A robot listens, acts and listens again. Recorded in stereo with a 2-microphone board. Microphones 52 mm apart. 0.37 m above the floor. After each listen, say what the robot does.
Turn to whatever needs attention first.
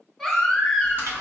Turn 30° left.
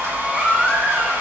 Turn 35° right.
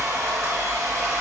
Keep listening.
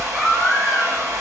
Found it: a baby crying, straight ahead, 1 to 2 m away.